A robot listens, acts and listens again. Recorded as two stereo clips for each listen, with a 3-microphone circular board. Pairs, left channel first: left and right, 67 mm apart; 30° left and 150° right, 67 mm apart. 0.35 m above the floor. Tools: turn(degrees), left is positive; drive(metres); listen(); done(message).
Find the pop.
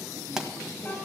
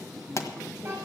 done("Facing the pop.")